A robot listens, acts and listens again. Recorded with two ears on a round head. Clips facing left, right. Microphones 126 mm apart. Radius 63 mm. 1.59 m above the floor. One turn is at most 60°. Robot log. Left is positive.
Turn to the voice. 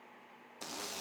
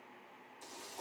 cmd idle
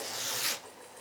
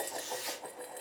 cmd idle
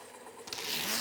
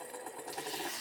end: I can't make out anyone speaking to turn to.